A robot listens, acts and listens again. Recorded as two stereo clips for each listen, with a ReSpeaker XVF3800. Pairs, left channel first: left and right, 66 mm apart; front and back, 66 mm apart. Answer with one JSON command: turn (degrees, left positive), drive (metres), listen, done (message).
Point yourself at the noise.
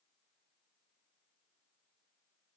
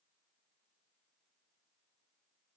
{"listen": true}
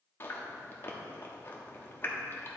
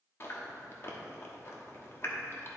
{"turn": 40}
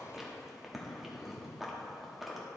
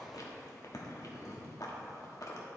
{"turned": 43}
{"done": "Found it: chewing, straight ahead."}